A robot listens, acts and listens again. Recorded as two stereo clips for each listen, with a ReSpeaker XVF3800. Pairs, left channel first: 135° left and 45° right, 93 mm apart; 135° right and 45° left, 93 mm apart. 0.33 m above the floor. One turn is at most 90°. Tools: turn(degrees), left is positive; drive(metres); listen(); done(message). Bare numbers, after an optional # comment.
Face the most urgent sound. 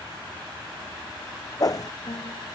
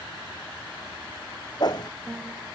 listen()
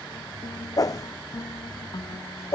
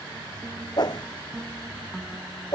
listen()
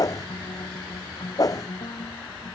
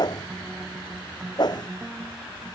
done("I can't make out anything urgent, only a piano and a whoosh.")